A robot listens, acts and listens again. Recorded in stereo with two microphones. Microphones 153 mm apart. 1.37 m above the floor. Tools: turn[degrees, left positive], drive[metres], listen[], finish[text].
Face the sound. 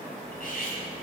Thought: The cutlery clinking: about 65° left or 115° left.
Action: turn[65]
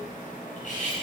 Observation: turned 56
Thought: So it is at 55° left.
Action: turn[55]
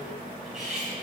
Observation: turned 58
Action: finish[Found it: cutlery clinking, straight ahead.]